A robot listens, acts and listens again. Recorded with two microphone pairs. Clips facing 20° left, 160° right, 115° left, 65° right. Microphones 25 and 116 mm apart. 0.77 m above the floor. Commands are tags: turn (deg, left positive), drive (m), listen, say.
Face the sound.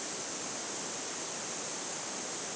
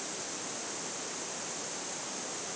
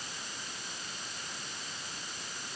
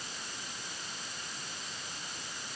<listen/>
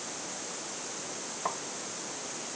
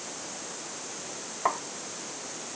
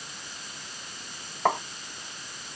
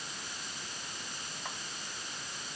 <turn deg="135"/>
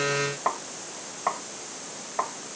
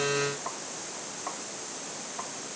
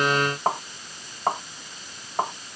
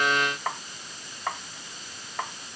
<turn deg="65"/>
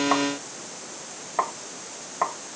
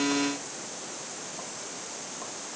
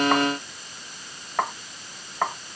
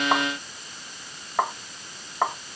<turn deg="15"/>
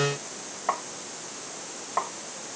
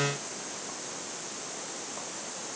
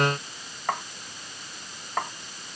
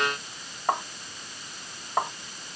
<say>Facing the tapping.</say>